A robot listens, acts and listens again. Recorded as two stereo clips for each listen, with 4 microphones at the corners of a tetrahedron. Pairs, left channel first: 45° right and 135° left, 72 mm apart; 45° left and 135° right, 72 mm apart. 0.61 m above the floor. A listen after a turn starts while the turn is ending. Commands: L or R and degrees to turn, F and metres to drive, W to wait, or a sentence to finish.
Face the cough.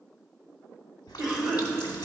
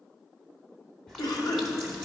L55
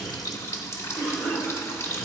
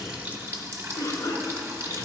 L10
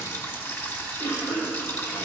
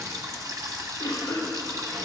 Found it: a cough, straight ahead.